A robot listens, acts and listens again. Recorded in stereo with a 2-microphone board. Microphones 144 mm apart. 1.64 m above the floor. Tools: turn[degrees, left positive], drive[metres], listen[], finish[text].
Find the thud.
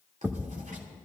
Action: turn[-30]
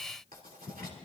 Action: listen[]
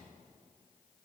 Action: finish[I heard a thud, but can't make it out now. It was about 20° left or 140° right.]